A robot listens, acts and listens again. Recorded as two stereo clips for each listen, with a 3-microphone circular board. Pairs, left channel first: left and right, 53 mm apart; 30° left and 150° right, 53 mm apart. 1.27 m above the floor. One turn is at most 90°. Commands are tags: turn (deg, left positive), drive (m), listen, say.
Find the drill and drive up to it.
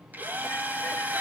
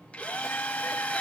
<turn deg="-35"/>
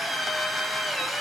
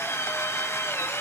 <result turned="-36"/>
<drive m="1.0"/>
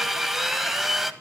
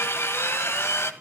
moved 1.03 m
<drive m="1.0"/>
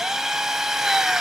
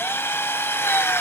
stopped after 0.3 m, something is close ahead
<turn deg="-10"/>
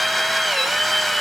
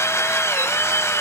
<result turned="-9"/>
<say>I am next to the drill.</say>